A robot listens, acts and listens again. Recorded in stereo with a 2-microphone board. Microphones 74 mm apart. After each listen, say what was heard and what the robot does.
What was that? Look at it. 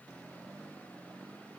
Keep listening.
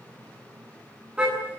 Turn 30° right.
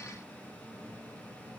Keep listening.
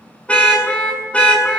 So it is at 15° left. Turn 15° left.
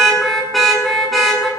Found it: a car horn, straight ahead.